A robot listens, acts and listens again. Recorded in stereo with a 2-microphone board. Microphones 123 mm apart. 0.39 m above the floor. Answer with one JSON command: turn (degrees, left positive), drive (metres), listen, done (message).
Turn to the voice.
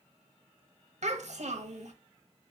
{"turn": -65}
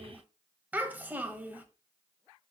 {"turn": -15}
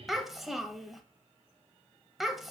{"done": "Found it: a child speaking, straight ahead, under 1 m away."}